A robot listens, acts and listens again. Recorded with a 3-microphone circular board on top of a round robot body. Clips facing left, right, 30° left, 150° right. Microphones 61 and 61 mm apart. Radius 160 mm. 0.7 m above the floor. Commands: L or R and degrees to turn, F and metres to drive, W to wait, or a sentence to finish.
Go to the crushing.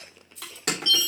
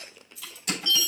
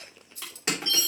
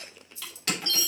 L95
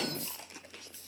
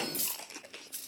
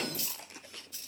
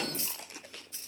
W
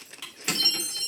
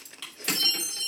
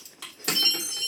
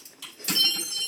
L10
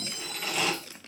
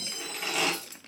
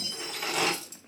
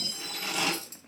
F1.0
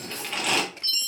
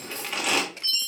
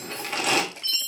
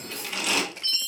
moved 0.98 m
F1.0
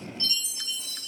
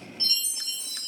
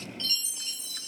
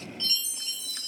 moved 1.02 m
W
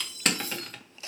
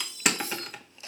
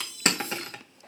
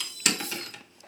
R10
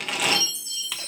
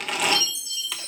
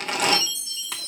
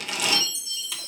F1.0
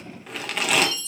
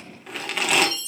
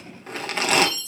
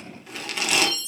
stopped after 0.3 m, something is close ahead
Arrived at the crushing, straight ahead.